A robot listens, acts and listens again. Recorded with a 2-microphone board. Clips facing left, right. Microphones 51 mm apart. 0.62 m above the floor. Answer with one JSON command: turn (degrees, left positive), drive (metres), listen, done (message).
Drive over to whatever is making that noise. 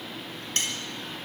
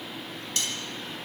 {"turn": 40}
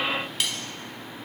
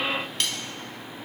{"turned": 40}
{"drive": 1.0}
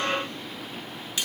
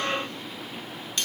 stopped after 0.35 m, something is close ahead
{"turn": 10}
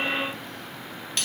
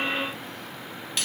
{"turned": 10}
{"done": "Something is in my way. I am facing the cutlery clinking but have not reached it."}